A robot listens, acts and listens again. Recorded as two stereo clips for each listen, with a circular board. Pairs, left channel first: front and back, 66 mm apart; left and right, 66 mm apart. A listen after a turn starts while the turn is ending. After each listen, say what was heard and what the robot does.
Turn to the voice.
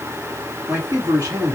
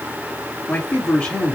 The man speaking: 165° left. Turn 165° left.
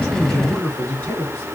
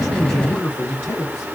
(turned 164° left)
The man speaking is now 60° left. Turn 60° left.
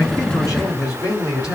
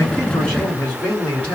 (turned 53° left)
The man speaking is now 20° left. Turn 20° left.
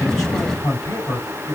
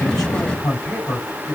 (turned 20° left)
Found it: a man speaking, straight ahead, 2 to 4 m away.